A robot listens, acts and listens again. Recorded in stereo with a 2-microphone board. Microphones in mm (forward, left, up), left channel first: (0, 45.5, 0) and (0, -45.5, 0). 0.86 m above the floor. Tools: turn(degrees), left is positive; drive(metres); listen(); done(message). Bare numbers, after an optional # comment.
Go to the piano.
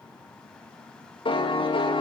# The piano: about 70° left or 110° left.
turn(70)
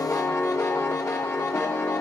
# So it is at 25° left.
turn(25)
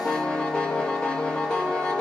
drive(1.0)
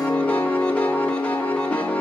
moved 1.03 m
# The piano is now 15° left.
turn(15)
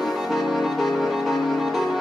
drive(1.0)
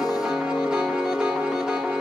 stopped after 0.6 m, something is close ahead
# The piano is now 10° right.
turn(-10)
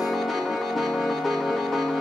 done("I am next to the piano.")